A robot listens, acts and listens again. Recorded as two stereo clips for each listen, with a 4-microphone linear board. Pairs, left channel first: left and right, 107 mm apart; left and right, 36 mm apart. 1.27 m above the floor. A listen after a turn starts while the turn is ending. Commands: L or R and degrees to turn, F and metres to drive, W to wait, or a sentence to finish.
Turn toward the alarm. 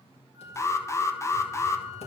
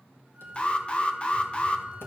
L25
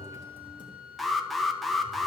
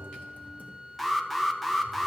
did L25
Found it: an alarm, straight ahead, under 1 m away.